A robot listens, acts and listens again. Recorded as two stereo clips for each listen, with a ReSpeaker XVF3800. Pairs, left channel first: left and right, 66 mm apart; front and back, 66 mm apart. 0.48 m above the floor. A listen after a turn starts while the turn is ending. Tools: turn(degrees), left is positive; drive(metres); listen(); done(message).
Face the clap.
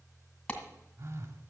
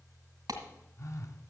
turn(degrees=155)
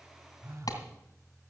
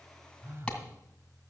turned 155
turn(degrees=70)
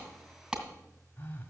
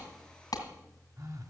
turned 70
turn(degrees=-15)
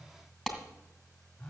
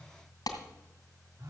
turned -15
done("Found it: a clap, straight ahead, 2 to 4 m away.")